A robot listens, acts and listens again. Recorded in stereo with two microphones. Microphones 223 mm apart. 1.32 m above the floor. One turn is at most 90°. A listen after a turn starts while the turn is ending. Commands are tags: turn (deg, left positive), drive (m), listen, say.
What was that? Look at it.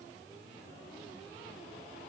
<listen/>
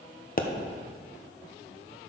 <turn deg="40"/>
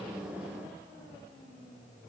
<listen/>
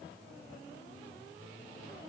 <say>I heard a pop, but can't make it out now. It was about straight ahead or 100° left.</say>